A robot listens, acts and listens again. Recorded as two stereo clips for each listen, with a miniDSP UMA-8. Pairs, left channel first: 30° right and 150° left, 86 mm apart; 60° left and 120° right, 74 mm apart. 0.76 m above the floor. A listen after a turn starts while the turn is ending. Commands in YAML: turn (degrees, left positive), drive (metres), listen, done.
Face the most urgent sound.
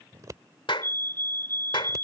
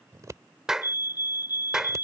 turn: 35
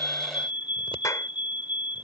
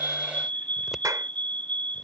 turn: -10
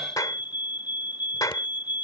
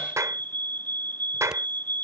done: "Found it: a fire alarm, straight ahead."